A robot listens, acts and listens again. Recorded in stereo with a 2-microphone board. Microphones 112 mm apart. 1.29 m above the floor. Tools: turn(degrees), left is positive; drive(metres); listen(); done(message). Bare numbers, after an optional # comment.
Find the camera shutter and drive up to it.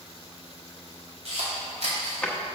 # The camera shutter: about 70° right or 110° right.
turn(-70)
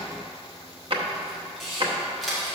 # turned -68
drive(1.0)
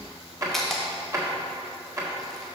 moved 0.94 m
drive(1.0)
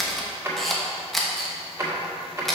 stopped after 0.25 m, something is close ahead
done("Arrived at the camera shutter, straight ahead.")